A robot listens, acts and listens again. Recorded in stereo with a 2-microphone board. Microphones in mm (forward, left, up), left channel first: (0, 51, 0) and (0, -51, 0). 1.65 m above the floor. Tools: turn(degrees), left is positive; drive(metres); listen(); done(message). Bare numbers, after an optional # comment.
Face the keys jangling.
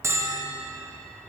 listen()
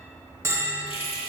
# The keys jangling: about 65° left or 115° left.
turn(65)
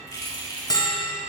# So it is at 40° left.
turn(40)
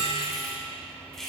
done("Facing the keys jangling.")